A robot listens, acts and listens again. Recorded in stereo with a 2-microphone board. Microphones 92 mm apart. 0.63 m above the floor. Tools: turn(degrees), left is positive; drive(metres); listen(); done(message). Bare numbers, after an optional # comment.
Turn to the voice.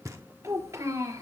# The child speaking: about 40° right or 140° right.
turn(-40)
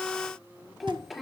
done("Facing the child speaking.")